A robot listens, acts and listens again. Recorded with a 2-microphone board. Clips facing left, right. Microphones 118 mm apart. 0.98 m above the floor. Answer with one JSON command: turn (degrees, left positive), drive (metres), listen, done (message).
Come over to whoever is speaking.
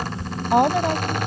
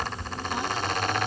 {"turn": 65}
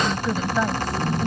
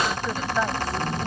{"drive": 1.0}
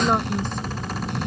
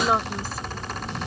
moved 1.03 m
{"listen": true}
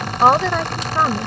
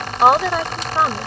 {"drive": 1.0}
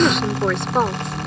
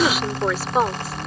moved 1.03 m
{"drive": 1.0}
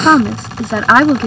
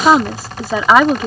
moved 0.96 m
{"turn": -10}
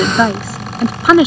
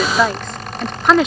{"drive": 1.0}
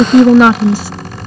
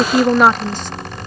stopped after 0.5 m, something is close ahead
{"turn": 10}
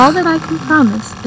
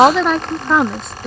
{"done": "Arrived at the woman speaking, straight ahead."}